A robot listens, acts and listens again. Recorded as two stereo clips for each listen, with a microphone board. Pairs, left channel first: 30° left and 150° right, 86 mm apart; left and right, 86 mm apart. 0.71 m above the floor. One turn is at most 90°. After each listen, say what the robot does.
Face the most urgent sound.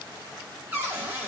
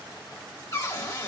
Keep listening.
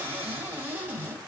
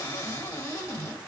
Keep listening.
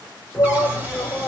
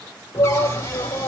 Turn 90° left.
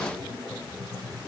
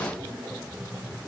Found it: a shout, straight ahead, 1 to 2 m away.